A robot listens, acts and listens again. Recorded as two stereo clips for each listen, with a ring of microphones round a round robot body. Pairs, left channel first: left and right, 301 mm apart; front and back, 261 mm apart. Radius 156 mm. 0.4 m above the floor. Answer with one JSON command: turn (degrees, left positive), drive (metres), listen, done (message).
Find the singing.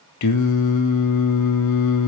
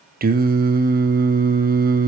{"turn": 125}
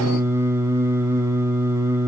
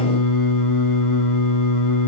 {"turn": -10}
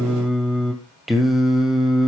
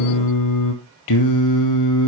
{"done": "Facing the singing, 2 to 4 m away."}